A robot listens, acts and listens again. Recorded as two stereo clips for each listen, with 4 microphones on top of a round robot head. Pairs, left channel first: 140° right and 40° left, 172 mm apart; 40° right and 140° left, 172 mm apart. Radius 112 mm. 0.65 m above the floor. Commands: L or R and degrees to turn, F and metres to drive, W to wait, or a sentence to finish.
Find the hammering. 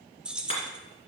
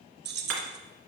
L160
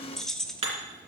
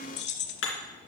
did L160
R20
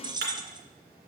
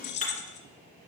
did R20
L10
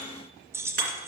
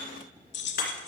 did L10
W
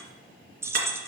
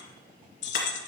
W
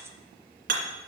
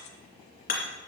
Facing the hammering.